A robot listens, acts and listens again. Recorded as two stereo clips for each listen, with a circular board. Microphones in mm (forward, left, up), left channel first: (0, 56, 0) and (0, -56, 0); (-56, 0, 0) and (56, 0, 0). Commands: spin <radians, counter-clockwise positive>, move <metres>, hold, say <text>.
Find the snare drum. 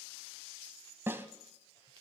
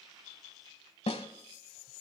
spin -2.79
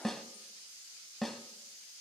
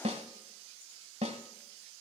say Found it: a snare drum, straight ahead, 1 to 2 m away.